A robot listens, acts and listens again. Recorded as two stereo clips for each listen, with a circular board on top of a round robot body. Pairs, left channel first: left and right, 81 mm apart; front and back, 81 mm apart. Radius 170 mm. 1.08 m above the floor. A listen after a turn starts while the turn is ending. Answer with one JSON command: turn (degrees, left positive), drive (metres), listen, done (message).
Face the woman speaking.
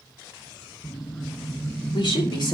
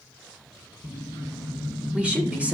{"turn": 105}
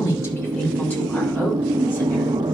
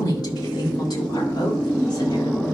{"listen": true}
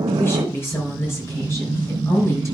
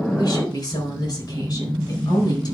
{"turn": 35}
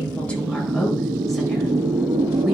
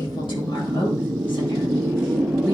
{"done": "Found it: a woman speaking, straight ahead."}